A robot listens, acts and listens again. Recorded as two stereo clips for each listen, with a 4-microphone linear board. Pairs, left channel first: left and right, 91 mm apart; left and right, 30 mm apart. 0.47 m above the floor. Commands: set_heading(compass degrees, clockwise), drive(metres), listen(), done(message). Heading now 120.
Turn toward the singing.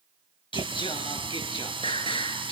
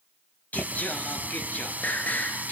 set_heading(30)
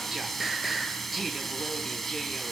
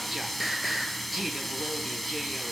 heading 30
done("Found it: singing, straight ahead, over 4 m away.")